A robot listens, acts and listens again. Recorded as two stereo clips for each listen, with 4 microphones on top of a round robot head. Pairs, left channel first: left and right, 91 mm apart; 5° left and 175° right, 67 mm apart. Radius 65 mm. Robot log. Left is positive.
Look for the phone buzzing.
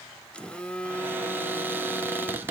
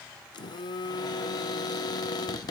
note: The phone buzzing: 10° left.
cmd yaw +10
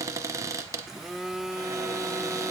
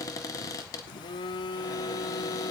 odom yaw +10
end: Facing the phone buzzing.